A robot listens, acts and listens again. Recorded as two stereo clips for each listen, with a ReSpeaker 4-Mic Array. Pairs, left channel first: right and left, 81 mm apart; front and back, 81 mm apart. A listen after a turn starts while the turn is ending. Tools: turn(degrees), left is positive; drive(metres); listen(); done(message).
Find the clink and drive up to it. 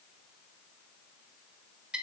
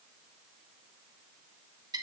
listen()
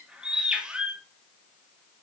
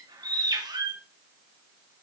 listen()
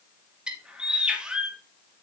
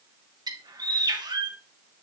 done("I can't make out a clink, only a bird.")